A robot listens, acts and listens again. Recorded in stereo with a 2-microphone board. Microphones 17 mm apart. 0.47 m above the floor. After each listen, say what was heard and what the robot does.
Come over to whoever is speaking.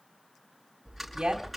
The woman speaking: about 70° right or 110° right. Turn 70° right.
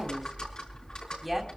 So it is at 10° right. Turn 10° right.
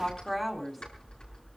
Drive 1.0 m forward.
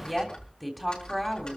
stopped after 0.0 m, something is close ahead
Blocked. The woman speaking is further on, straight ahead.